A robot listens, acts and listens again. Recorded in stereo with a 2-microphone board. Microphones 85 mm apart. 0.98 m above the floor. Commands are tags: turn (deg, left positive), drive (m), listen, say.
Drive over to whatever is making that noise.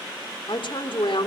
<turn deg="90"/>
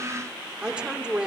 <turn deg="-10"/>
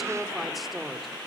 <drive m="1.0"/>
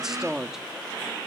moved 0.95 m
<drive m="1.0"/>
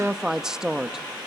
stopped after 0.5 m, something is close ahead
<say>I am next to the woman speaking.</say>